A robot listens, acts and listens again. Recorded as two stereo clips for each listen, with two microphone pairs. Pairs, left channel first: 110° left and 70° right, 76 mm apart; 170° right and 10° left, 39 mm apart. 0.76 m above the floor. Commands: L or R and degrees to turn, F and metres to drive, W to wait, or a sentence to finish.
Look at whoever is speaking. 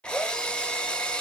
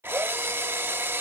W
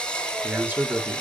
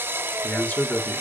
R135
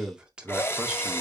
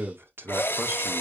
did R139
Facing the man speaking, 1 to 2 m away.